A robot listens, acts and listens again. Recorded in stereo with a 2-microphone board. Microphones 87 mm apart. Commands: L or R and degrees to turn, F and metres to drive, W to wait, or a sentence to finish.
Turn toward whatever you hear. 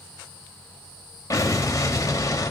L40
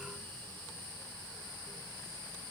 W
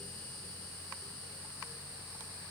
I heard an explosion, but can't make it out now. It was about straight ahead or 100° left.